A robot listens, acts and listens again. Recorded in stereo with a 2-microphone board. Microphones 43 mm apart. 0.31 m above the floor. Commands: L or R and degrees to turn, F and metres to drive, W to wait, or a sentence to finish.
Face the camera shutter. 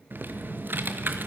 W
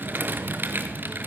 W
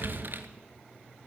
I can't make out a camera shutter to turn to.